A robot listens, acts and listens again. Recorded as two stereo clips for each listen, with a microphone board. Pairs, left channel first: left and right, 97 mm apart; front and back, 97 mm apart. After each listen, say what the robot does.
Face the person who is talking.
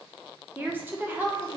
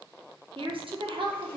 Turn 160° right.
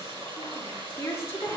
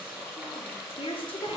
Turn 25° left.
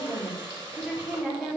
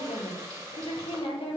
Facing the woman speaking.